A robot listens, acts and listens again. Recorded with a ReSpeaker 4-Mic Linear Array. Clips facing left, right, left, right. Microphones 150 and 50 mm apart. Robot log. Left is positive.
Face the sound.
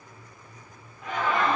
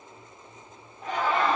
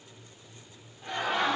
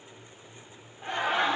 note: The laughter: about 30° right or 150° right.
cmd yaw -30
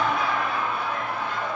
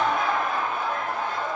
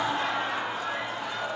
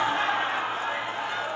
note: The laughter: about 40° right or 140° right.
cmd yaw -40
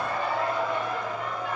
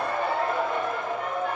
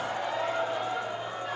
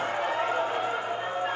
note: So it is at 120° right.
cmd yaw -120
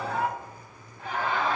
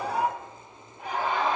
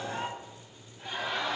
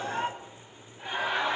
note: The laughter is now 20° right.
cmd yaw -20
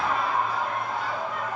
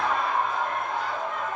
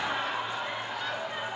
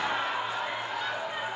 end: Facing the laughter, 2 to 4 m away.